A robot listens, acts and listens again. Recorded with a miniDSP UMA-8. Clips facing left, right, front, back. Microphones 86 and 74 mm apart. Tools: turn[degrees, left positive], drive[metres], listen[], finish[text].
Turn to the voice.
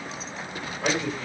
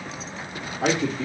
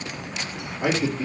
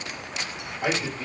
Thought: The man speaking: 80° right.
Action: turn[-80]
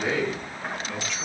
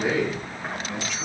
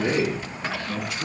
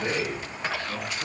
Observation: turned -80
Thought: The man speaking is now 10° right.
Action: turn[-10]
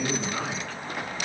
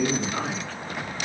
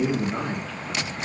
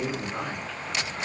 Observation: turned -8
Thought: The man speaking is now 10° right.
Action: turn[-10]
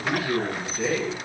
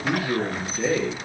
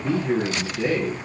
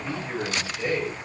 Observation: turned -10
Thought: The man speaking is now 20° right.
Action: turn[-20]
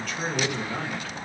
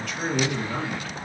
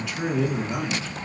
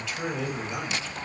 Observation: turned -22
Thought: The man speaking is now 10° right.
Action: turn[-10]
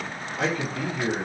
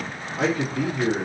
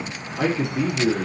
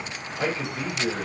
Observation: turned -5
Action: finish[Found it: a man speaking, straight ahead.]